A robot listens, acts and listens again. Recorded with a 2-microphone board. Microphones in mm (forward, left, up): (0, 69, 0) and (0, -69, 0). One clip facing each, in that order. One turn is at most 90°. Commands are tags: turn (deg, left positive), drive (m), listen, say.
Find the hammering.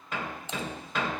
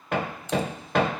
<turn deg="-65"/>
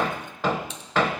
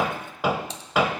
<turn deg="-10"/>
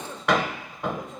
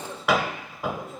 <say>Facing the hammering, 1 to 2 m away.</say>